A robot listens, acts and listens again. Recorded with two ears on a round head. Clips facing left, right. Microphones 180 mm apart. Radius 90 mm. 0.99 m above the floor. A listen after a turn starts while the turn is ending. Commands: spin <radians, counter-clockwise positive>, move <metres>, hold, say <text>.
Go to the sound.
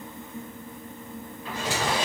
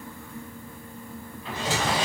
spin -0.35
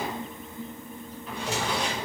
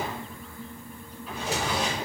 move 1.0
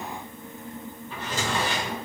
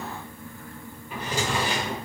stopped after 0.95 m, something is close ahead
spin -0.26
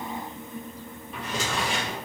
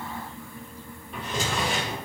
say Arrived at the drawer, straight ahead.